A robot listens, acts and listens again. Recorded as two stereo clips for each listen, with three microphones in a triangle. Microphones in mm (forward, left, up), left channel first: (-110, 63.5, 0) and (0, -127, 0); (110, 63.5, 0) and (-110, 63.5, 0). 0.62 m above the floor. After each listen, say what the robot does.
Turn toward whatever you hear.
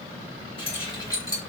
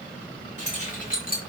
Turn 50° left.
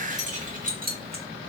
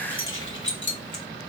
Turn 20° right.
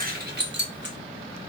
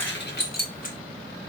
Turn 45° right.
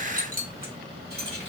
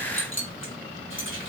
Turn 25° right.
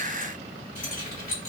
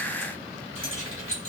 Turn 15° right.
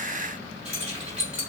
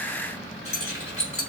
Found it: keys jangling, straight ahead.